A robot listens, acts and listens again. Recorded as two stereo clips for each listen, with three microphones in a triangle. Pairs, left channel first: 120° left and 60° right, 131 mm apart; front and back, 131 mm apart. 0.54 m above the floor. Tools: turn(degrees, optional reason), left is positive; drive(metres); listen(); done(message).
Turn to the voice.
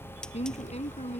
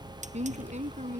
turn(degrees=155, reason="The woman speaking: 155° left.")
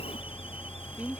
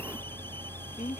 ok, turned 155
turn(degrees=25, reason="The woman speaking is now 25° left.")
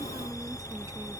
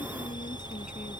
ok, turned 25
listen()
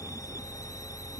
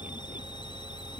listen()
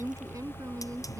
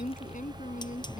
done("Found it: a woman speaking, straight ahead.")